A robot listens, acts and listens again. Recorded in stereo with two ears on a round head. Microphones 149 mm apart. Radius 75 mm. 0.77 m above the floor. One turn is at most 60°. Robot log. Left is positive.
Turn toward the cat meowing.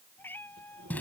cmd yaw +30
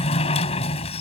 cmd idle
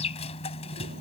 cmd idle
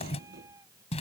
note: So it is at 20° right.
cmd yaw -20
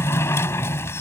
cmd idle
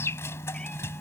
cmd idle
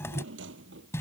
end: Facing where the cat meowing came from. I can't hear it now.